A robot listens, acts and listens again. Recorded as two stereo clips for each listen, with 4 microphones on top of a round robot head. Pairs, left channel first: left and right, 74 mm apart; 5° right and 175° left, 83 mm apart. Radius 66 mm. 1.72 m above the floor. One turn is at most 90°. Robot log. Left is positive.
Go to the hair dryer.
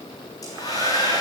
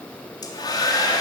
note: The hair dryer: 35° left.
cmd yaw +35
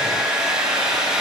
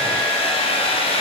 cmd fwd 1.0
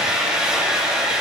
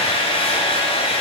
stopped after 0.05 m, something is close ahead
end: Something is in my way. I am facing the hair dryer but have not reached it.